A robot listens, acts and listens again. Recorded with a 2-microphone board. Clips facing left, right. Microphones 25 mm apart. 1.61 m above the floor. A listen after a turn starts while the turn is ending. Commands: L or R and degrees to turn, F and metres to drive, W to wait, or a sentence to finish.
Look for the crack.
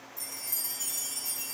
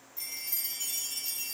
W
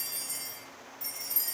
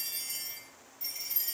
W
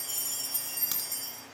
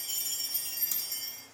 L50
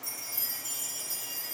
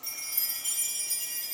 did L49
W
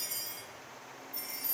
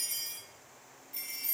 I heard a crack, but can't make it out now. It was about straight ahead or 80° left.